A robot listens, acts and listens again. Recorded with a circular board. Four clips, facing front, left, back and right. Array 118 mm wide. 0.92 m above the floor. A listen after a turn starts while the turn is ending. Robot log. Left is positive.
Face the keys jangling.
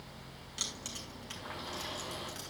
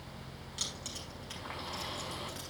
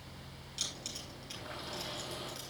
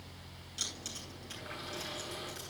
note: The keys jangling: 40° left.
cmd yaw +40
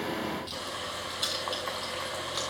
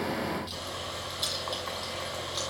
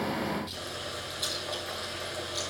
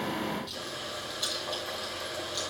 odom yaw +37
end: Found it: keys jangling, straight ahead, over 4 m away.